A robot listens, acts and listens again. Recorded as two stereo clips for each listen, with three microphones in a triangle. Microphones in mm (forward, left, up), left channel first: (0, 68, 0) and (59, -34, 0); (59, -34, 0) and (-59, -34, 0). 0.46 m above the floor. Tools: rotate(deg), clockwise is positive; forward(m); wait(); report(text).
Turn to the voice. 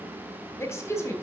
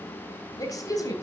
rotate(-55)
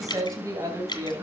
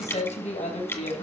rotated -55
report("Found it: a woman speaking, straight ahead.")